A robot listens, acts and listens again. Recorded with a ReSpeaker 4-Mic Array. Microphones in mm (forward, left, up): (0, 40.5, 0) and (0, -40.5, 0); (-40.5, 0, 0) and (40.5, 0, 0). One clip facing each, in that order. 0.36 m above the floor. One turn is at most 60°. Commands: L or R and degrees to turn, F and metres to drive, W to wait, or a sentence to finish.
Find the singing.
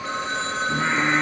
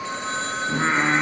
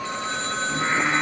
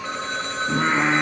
R25
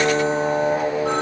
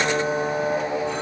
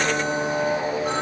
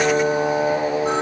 L15
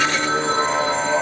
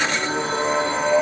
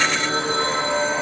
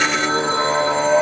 Facing the singing.